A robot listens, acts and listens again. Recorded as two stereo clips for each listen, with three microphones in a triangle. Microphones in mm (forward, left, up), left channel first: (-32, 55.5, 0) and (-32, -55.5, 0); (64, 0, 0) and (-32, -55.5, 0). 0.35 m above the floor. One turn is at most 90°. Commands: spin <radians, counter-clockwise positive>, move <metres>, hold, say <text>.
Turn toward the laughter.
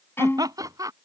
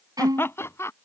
spin -0.61
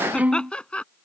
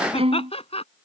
spin 0.17
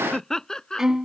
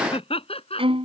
say Found it: laughter, straight ahead.